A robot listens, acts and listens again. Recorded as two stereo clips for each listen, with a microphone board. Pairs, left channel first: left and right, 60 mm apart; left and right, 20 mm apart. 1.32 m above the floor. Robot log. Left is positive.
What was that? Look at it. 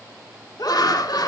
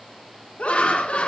cmd yaw +90
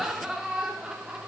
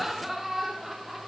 note: So it is at 10° right.
cmd yaw -10
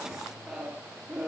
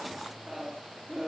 note: The laughter is now 10° right.
cmd yaw -10
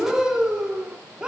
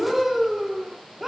note: The laughter is now 15° right.
cmd yaw -15
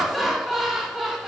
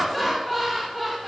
end: Found it: laughter, straight ahead.